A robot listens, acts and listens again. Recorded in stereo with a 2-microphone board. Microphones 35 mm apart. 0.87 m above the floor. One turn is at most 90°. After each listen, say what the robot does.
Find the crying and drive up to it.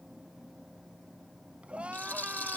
Turn 35° right.
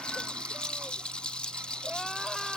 Keep listening.
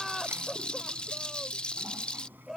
Drive 1.0 m forward.
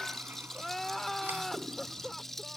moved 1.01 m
Drive 1.0 m forward.
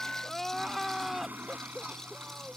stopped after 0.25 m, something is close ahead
Blocked. The crying is further on, straight ahead.